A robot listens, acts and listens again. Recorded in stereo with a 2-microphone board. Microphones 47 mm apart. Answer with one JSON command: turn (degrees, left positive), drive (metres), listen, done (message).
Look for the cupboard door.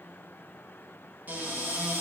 {"turn": -40}
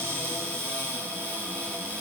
{"turn": -100}
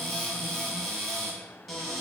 {"done": "Facing the cupboard door."}